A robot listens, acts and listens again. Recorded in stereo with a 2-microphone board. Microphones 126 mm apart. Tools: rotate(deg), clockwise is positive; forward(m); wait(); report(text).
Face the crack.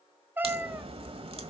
rotate(50)
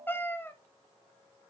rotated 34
wait()
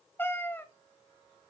report("I heard a crack, but can't make it out now. It was about 20° right or 95° right.")